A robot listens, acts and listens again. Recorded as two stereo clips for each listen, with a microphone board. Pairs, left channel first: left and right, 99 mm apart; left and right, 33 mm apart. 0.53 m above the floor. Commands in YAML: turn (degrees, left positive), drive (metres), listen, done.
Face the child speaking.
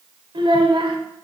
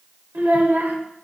turn: -60
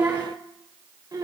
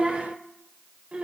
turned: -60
turn: -45
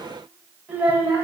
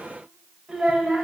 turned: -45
turn: -25
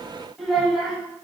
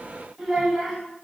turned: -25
done: "Facing the child speaking."